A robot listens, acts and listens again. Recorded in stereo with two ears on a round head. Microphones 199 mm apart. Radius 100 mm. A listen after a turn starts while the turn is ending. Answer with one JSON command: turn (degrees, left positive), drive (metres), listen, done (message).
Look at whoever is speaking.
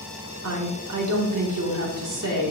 {"turn": -90}
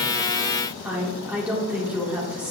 {"done": "Found it: a woman speaking, straight ahead."}